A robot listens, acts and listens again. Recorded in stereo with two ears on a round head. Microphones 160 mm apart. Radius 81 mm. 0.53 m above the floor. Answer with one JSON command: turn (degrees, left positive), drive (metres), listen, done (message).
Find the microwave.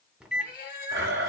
{"turn": -30}
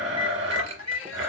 {"turn": -145}
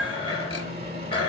{"turn": -40}
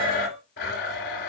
{"listen": true}
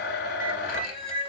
{"listen": true}
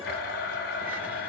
{"done": "Facing where the microwave came from. I can't hear it now."}